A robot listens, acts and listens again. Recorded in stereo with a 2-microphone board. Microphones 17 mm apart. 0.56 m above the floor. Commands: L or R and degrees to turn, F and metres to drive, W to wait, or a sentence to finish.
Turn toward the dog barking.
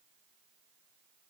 W
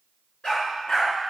L90
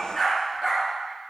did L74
Facing the dog barking, 2 to 4 m away.